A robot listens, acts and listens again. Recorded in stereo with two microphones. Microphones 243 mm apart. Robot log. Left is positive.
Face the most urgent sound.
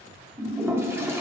cmd idle
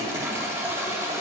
cmd idle
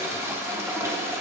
end: I can't make out anything urgent, only a toilet flushing.